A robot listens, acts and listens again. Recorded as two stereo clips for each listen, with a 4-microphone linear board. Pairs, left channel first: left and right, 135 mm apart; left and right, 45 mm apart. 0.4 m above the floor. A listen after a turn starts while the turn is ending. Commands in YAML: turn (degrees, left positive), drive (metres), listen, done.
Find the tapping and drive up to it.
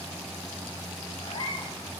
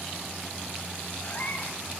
listen: true
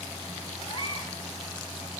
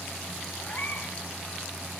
listen: true
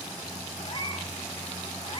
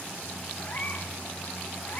done: "I can't make out tapping to turn to."